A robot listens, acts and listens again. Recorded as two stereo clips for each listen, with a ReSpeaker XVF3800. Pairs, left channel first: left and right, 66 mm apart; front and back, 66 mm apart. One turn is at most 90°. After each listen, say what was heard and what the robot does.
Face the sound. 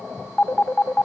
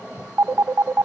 The phone ringing: 150° left. Turn 90° left.
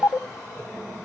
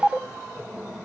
The phone ringing is now 65° left. Turn 65° left.
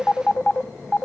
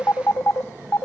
The phone ringing is now 10° left. Turn 10° left.
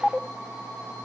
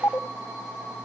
Facing the phone ringing.